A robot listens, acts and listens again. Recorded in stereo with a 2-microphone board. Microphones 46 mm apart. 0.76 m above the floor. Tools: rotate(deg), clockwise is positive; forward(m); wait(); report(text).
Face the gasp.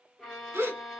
rotate(70)
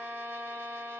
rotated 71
wait()
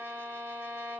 report("I heard a gasp, but can't make it out now. It was about 5° left or 40° right.")